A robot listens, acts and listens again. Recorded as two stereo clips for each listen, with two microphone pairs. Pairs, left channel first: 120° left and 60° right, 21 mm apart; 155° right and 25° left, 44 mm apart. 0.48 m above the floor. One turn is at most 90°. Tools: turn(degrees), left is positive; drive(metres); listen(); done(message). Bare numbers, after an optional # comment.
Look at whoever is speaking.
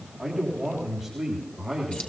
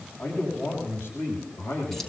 # The man speaking: 150° right.
turn(-90)
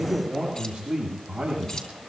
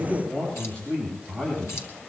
# The man speaking is now 90° right.
turn(-90)
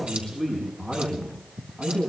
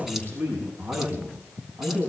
# The man speaking is now 10° left.
turn(10)
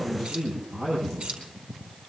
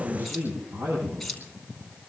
done("Facing the man speaking, over 4 m away.")